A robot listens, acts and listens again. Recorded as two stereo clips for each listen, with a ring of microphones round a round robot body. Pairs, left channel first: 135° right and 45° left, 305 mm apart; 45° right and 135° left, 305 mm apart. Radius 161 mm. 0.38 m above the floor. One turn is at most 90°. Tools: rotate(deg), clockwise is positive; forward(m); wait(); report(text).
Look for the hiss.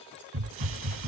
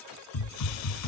report("Found it: a hiss, straight ahead.")